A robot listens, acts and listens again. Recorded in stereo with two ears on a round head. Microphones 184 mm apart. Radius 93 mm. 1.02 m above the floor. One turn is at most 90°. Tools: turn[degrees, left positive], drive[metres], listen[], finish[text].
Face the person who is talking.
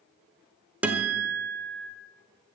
Action: listen[]
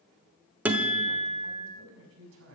Action: turn[-90]
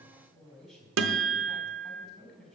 Action: finish[Found it: a man speaking, straight ahead, over 4 m away.]